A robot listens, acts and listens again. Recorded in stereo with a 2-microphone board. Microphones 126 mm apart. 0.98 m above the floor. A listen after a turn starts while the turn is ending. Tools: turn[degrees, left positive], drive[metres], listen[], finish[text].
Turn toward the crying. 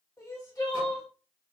Thought: The crying: about 30° left or 150° left.
Action: turn[30]
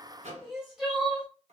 Action: finish[Found it: crying, straight ahead, 1 to 2 m away.]